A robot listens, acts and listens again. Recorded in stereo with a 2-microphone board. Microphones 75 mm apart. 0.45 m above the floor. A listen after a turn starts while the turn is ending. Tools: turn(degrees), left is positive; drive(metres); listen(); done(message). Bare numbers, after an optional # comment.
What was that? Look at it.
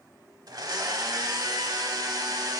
# The blender: about 60° right or 120° right.
turn(-60)
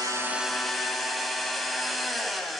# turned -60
done("Found it: a blender, straight ahead.")